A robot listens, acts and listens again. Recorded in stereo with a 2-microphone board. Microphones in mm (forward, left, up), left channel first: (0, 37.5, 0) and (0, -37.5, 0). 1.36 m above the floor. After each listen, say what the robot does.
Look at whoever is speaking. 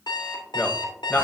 Turn 25° left.
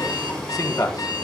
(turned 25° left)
Turn 130° left.
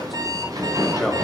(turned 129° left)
Keep listening.
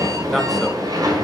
Keep listening.
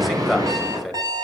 Found it: a man speaking, straight ahead.